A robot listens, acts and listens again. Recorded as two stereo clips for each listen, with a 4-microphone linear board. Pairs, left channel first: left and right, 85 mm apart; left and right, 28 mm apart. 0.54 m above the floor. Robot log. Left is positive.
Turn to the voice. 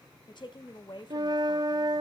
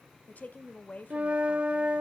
note: The woman speaking: about 60° left or 120° left.
cmd yaw +60
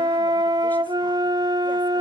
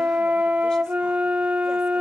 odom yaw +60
cmd idle
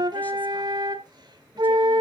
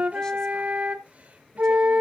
cmd idle
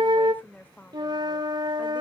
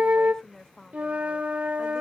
note: So it is at 20° left.
cmd yaw +20
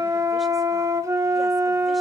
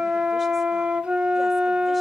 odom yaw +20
cmd idle
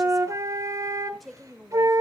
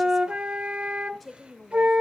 end: Facing the woman speaking.